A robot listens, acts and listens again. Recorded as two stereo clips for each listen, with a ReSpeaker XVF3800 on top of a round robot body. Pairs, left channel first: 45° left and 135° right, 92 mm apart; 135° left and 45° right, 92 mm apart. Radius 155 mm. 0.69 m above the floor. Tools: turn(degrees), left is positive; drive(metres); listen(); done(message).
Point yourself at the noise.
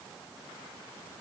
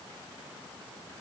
listen()
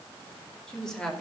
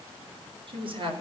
turn(degrees=-35)
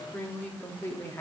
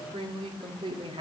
turn(degrees=-20)
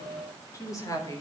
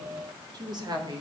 turn(degrees=-10)
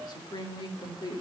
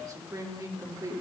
done("Facing the woman speaking, 2 to 4 m away.")